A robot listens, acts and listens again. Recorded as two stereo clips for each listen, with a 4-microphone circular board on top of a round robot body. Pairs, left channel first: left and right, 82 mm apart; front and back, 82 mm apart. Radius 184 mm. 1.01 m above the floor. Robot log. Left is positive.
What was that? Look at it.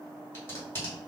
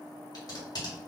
note: The tape being pulled: 30° left.
cmd yaw +30
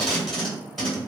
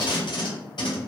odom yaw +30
end: Found it: tape being pulled, straight ahead.